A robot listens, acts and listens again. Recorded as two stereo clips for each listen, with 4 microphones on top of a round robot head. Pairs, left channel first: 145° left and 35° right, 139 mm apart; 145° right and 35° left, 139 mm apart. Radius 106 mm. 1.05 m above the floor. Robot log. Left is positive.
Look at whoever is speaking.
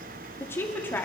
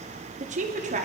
note: The woman speaking: 65° left.
cmd yaw +65
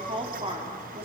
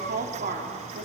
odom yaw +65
note: The woman speaking is now 15° left.
cmd yaw +15
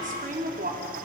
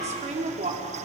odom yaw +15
note: The woman speaking is now 10° right.
cmd yaw -10
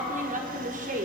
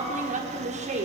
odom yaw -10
end: Found it: a woman speaking, straight ahead, over 4 m away.